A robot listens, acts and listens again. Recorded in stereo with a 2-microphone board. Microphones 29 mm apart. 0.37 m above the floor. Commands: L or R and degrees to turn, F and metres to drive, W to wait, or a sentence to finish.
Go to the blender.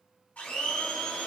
L70
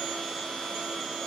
L30
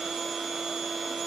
F1.0
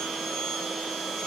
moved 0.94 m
F1.0
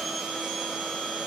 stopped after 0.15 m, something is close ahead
Arrived at the blender, straight ahead.